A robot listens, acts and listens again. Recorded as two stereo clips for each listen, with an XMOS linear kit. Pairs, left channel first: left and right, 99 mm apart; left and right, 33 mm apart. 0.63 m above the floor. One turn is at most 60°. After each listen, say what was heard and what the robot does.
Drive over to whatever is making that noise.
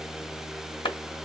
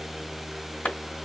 The clap: about 55° left or 125° left. Turn 55° left.
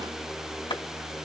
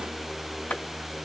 So it is at 65° left. Turn 60° left.
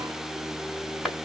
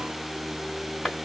Drive 1.0 m forward.
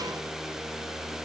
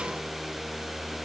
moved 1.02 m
Keep listening.
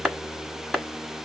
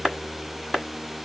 Drive 1.0 m forward.
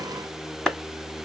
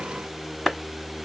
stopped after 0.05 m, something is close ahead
I am next to the clap.